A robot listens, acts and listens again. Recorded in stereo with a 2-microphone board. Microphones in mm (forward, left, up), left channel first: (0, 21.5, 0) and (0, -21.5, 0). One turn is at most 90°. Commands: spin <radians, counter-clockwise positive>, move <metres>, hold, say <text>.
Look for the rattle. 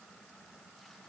hold
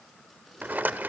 spin -0.79
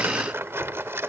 spin -1.48
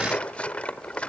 spin 0.61
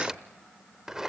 spin -0.17
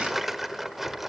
say Found it: a rattle, straight ahead.